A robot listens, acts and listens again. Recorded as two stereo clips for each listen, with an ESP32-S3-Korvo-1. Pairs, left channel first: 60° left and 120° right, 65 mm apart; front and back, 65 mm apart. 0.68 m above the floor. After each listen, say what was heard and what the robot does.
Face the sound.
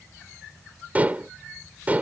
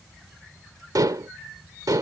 The dishes clattering: 175° left. Turn 175° left.
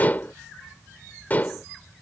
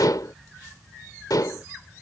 Found it: dishes clattering, straight ahead.